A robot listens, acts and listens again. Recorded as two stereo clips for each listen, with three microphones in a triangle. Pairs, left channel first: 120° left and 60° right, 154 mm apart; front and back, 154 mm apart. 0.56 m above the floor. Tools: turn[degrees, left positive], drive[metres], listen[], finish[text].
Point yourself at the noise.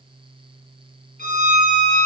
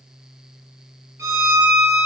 Thought: The violin: 110° left.
Action: turn[110]
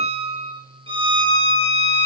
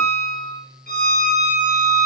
Action: finish[Facing the violin, 2 to 4 m away.]